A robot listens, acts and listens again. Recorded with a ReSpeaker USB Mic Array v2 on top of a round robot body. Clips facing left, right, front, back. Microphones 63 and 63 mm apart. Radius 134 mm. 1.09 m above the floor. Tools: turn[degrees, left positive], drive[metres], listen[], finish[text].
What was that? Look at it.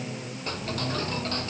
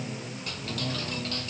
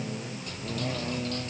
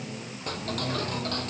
Thought: The ticking: 145° left.
Action: turn[145]
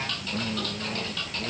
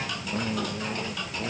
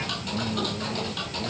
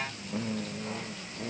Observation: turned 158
Thought: The ticking is now 15° right.
Action: turn[-15]
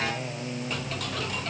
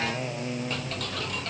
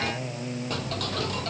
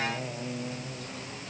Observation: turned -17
Action: finish[Found it: ticking, straight ahead.]